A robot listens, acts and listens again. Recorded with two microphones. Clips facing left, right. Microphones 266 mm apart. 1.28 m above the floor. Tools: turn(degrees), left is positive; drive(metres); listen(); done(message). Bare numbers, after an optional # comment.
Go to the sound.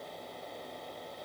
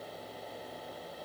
listen()
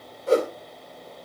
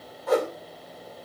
# The whoosh: about 30° left or 150° left.
turn(30)
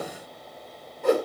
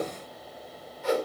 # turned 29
# So it is at 120° left.
turn(120)
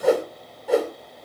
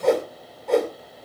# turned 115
drive(1.0)
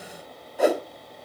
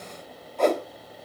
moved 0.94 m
# The whoosh is now 10° left.
turn(10)
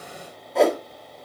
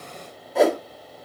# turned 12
drive(1.0)
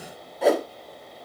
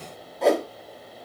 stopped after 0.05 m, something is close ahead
done("Arrived at the whoosh, straight ahead.")